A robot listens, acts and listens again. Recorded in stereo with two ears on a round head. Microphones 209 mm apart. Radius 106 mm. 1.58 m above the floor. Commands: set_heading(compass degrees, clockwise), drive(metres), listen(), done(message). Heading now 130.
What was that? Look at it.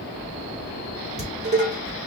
set_heading(160)
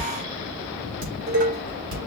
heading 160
set_heading(280)
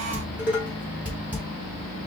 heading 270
done("Facing the dishes clattering, 2 to 4 m away.")